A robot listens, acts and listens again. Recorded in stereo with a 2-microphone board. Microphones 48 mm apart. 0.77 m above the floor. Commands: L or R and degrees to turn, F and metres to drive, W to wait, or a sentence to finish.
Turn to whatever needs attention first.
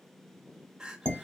R30
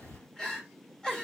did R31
L15
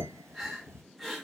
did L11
Found it: crying, straight ahead, under 1 m away.